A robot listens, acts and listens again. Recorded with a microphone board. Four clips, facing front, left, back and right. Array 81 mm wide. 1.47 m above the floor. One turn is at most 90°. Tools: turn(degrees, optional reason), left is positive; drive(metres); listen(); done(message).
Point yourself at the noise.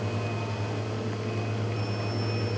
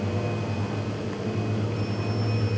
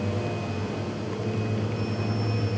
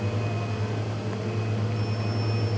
listen()
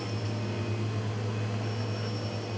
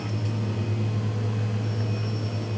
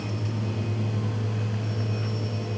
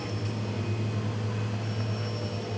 listen()
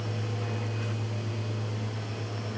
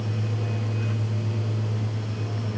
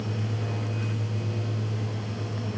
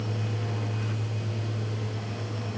done("I can't make out anything to turn to.")